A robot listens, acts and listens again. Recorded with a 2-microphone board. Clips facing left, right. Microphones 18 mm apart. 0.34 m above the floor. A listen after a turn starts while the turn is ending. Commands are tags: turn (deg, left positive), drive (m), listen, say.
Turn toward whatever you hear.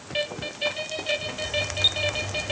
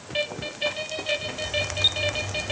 <listen/>
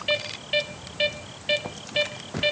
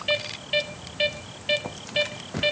<listen/>
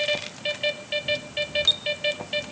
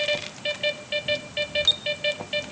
<say>I can't make out anything to turn to.</say>